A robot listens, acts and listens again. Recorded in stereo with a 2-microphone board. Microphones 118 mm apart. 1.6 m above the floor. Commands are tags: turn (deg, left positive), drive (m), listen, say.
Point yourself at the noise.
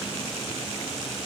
<listen/>
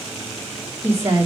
<turn deg="-20"/>
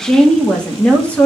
<turn deg="15"/>
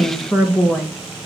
<turn deg="10"/>
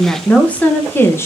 <turn deg="20"/>
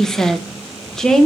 <say>Facing the woman speaking, 1 to 2 m away.</say>